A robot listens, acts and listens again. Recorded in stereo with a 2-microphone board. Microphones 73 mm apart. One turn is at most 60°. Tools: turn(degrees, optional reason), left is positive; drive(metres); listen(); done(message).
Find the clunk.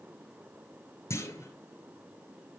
turn(degrees=45, reason="The clunk: about 45° left or 135° left.")
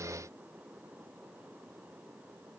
listen()
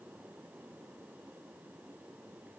done("I heard a clunk, but can't make it out now. It was about straight ahead or 90° left.")